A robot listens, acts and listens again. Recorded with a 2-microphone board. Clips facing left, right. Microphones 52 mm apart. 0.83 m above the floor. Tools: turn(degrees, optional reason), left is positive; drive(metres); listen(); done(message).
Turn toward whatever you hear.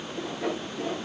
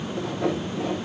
turn(degrees=-70, reason="The sawing: about 70° right or 110° right.")
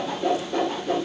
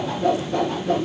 done("Facing the sawing, over 4 m away.")